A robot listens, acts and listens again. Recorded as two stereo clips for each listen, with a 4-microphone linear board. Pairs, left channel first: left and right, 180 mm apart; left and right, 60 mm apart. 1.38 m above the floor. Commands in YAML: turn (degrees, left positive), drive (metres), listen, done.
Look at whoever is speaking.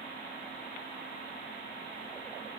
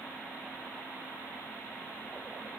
listen: true
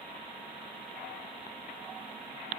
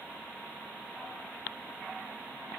listen: true
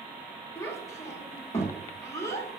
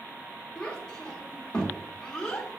turn: 15
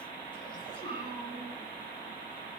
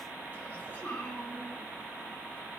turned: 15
turn: 150
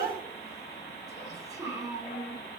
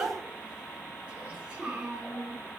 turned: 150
turn: -20
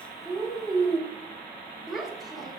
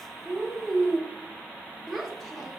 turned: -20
done: "Facing the child speaking."